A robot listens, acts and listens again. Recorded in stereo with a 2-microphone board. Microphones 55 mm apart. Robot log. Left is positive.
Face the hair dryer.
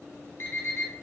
cmd idle
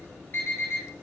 cmd idle
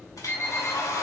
cmd yaw +90
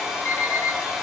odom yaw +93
end: Facing the hair dryer.